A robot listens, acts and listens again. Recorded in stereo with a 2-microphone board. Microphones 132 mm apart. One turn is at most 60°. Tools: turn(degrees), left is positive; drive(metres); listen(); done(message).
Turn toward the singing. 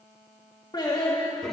turn(degrees=35)
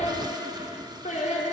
turn(degrees=60)
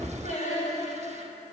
turn(degrees=60)
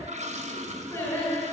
turn(degrees=20)
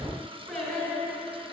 done("Facing the singing.")